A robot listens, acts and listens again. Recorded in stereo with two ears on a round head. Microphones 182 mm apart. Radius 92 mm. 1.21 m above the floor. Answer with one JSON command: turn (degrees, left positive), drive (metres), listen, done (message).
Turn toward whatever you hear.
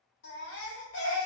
{"turn": 60}
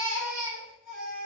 {"done": "Found it: a baby crying, straight ahead, 2 to 4 m away."}